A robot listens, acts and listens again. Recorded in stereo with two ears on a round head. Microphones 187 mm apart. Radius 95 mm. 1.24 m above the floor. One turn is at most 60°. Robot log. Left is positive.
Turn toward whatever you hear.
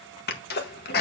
note: The sneeze: about 50° left or 130° left.
cmd yaw +50
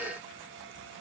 cmd idle
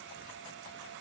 end: I heard a sneeze, but can't make it out now. It was about straight ahead or 80° left.